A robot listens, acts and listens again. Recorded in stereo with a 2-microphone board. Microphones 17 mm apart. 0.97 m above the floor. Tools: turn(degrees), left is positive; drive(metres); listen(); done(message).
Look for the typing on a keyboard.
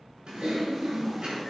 turn(degrees=-70)
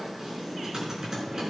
turn(degrees=-40)
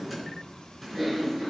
done("Found it: typing on a keyboard, straight ahead, over 4 m away.")